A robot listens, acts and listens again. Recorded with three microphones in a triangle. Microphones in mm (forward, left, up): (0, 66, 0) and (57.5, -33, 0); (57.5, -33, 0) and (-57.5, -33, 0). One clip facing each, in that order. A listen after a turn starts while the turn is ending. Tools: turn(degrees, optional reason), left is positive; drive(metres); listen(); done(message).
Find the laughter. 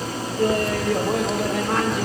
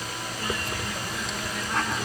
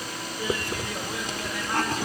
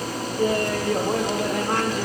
turn(degrees=145, reason="The laughter: 145° left.")
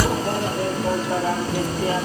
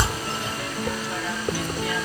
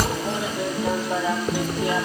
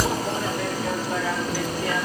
turn(degrees=70, reason="The laughter is now 70° left.")
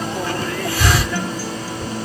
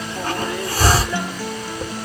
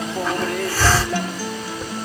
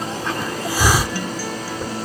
listen()
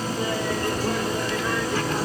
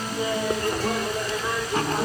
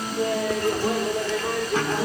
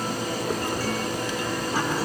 turn(degrees=10, reason="The laughter is now 10° left.")
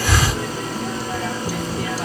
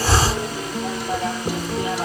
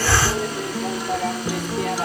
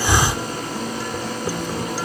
listen()
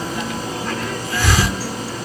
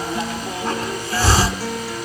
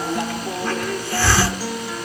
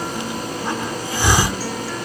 listen()
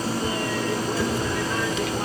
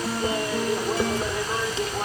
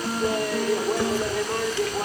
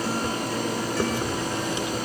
done("Facing the laughter.")